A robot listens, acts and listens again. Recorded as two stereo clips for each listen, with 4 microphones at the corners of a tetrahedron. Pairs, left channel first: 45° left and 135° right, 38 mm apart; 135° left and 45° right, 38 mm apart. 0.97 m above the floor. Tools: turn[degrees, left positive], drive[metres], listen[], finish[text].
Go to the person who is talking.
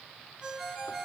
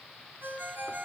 Action: listen[]
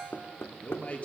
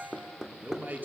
Thought: The man speaking: 10° right.
Action: turn[-10]
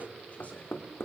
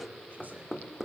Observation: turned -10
Action: drive[1.0]
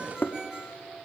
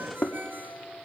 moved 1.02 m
Action: listen[]
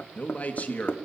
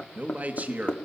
Action: drive[1.0]
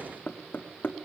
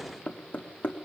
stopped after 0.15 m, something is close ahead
Action: listen[]
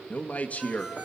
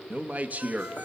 Action: finish[I am next to the man speaking.]